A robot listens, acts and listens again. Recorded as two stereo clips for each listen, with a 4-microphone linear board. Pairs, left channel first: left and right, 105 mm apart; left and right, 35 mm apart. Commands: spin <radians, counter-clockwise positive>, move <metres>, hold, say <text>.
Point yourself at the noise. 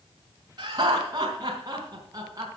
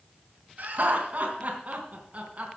spin -0.61
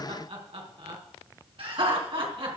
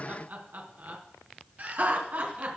spin -2.18
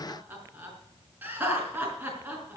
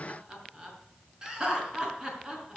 spin -0.26
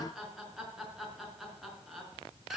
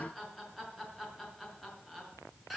say Facing the laughter, over 4 m away.